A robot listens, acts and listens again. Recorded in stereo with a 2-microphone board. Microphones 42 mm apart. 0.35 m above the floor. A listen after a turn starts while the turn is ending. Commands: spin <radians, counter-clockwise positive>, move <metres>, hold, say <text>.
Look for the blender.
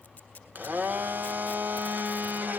spin -0.79
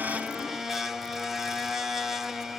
spin -0.17
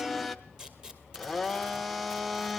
say Found it: a blender, straight ahead, 1 to 2 m away.